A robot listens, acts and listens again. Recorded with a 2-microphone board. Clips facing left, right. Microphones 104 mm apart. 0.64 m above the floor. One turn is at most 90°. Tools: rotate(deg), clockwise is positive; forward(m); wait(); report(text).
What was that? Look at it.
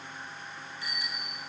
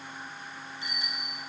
rotate(20)
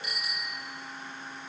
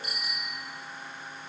rotate(90)
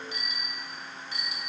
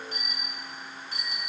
rotate(40)
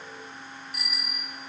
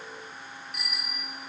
report("Facing the bicycle bell, 2 to 4 m away.")